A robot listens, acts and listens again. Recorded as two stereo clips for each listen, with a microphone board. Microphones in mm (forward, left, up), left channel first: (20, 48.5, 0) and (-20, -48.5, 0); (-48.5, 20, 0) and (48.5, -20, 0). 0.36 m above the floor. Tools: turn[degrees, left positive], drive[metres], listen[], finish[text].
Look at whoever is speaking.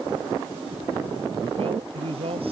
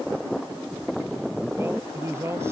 Thought: The man speaking: 90° right.
Action: turn[-90]
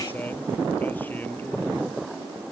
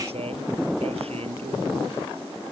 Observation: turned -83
Action: finish[Facing the man speaking.]